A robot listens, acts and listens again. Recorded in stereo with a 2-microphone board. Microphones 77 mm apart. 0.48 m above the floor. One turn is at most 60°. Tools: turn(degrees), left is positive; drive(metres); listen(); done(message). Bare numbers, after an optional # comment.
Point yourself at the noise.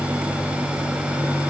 listen()
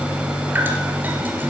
# The dripping: about 25° right or 155° right.
turn(-25)
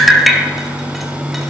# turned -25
done("Found it: dripping, straight ahead, 1 to 2 m away.")